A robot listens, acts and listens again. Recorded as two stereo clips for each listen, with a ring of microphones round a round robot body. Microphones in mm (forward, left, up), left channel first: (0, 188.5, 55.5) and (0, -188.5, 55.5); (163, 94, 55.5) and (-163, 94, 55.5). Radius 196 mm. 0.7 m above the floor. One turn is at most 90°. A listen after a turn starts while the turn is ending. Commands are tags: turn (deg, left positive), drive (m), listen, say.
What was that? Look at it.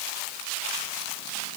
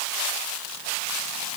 <listen/>
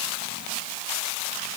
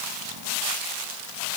<listen/>
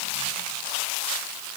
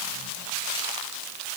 <say>I can't make out anything to turn to.</say>